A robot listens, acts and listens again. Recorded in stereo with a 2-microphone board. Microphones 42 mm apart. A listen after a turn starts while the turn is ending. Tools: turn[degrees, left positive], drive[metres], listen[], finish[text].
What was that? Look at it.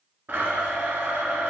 Thought: The blender: about 50° right or 130° right.
Action: turn[-50]
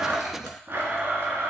Thought: So it is at 75° right.
Action: turn[-75]
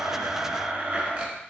Thought: The blender is now 30° right.
Action: turn[-30]
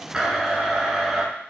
Action: finish[Facing the blender, 1 to 2 m away.]